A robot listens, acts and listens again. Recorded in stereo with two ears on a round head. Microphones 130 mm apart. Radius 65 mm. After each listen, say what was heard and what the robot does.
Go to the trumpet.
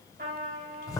The trumpet: about 60° right or 120° right. Turn 60° right.
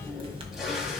Keep listening.
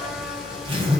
Keep listening.
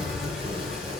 I heard a trumpet, but can't make it out now. It was about straight ahead or 60° right. I did not reach it.